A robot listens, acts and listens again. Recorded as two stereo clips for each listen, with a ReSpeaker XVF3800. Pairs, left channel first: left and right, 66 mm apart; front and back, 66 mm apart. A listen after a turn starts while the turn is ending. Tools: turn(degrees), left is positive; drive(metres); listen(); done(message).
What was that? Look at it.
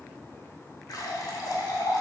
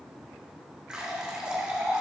turn(degrees=105)
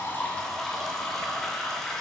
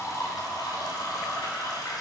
turn(degrees=10)
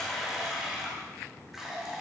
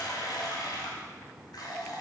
done("Facing the running tap, 2 to 4 m away.")